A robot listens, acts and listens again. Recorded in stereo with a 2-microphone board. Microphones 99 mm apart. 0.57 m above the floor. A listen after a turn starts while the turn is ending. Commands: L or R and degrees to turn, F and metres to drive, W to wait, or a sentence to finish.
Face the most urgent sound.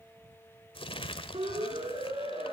R75
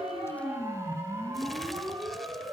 R30
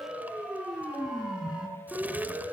R10
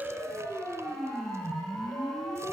Found it: a siren, straight ahead.